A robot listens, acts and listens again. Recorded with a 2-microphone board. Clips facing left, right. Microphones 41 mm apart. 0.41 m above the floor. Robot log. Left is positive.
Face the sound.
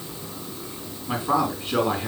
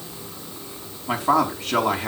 note: The man speaking: about 70° right or 110° right.
cmd yaw -70
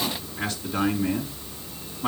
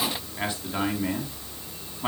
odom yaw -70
note: So it is at 25° right.
cmd yaw -25
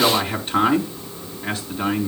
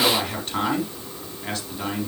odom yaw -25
note: The man speaking is now 10° left.
cmd yaw +10
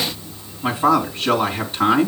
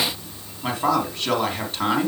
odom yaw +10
end: Found it: a man speaking, straight ahead, over 4 m away.